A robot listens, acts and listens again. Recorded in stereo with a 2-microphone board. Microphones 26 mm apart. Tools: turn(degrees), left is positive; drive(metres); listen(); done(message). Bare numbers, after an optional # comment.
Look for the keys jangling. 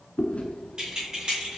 # The keys jangling: about 45° right or 135° right.
turn(-45)
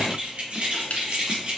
# The keys jangling: about 50° right or 130° right.
turn(-50)
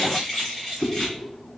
# So it is at 15° left.
turn(15)
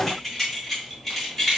# The keys jangling is now 15° left.
turn(15)
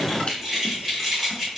done("Found it: keys jangling, straight ahead, 2 to 4 m away.")